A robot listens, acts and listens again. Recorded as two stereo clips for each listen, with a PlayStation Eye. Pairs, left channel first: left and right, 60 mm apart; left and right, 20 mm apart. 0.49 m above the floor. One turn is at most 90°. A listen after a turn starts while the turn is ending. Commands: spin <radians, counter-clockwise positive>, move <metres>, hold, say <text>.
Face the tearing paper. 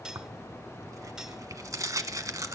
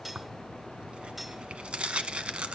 spin -1.22
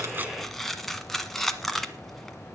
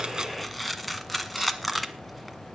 say Found it: tearing paper, straight ahead, 1 to 2 m away.